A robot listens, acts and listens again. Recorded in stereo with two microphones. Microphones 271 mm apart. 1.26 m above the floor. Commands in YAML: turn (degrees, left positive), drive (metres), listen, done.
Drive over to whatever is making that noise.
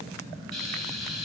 turn: -90
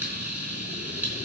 drive: 1.0
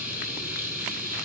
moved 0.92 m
drive: 1.0
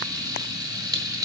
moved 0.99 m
turn: -15
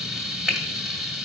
drive: 1.0
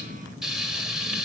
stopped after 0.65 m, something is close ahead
done: "Arrived at the frying, straight ahead."